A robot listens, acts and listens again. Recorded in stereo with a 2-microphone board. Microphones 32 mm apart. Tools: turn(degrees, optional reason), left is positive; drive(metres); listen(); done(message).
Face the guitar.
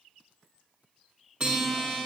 turn(degrees=-30, reason="The guitar: about 30° right or 150° right.")
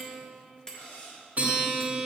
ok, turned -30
turn(degrees=-115, reason="So it is at 115° right.")
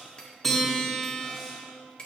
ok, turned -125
turn(degrees=10, reason="The guitar is now 10° left.")
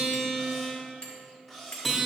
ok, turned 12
done("Facing the guitar, 1 to 2 m away.")